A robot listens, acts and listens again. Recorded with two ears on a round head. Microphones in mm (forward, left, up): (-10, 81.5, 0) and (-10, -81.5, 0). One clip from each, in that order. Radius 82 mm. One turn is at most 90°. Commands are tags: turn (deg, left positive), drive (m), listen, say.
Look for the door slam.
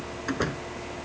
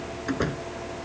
<turn deg="25"/>
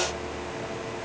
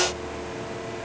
<listen/>
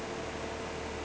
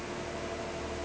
<say>I heard a door slam, but can't make it out now. It was about straight ahead or 130° left.</say>